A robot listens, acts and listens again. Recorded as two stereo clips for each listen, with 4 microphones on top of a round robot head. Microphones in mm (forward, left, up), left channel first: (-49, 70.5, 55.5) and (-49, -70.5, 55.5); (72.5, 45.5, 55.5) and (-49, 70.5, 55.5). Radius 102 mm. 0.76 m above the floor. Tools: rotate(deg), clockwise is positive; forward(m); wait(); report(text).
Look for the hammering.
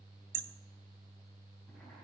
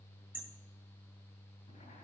rotate(110)
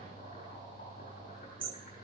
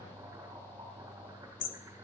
rotate(10)
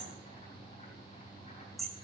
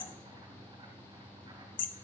report("Found it: hammering, straight ahead.")